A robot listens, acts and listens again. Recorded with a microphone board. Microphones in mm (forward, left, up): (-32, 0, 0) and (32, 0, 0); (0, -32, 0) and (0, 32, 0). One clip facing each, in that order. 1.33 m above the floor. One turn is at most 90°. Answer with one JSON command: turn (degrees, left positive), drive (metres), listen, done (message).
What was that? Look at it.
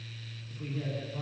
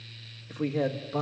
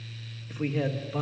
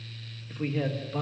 {"done": "Found it: a man speaking, straight ahead, 1 to 2 m away."}